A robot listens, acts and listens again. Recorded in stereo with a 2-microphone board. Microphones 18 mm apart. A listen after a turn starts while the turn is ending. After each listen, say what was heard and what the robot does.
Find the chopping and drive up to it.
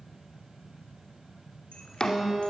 The chopping: about 40° left or 140° left. Turn 40° left.
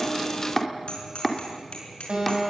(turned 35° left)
Drive 1.0 m forward.
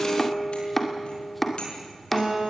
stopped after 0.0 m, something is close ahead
Something is in my way. I am facing the chopping but have not reached it.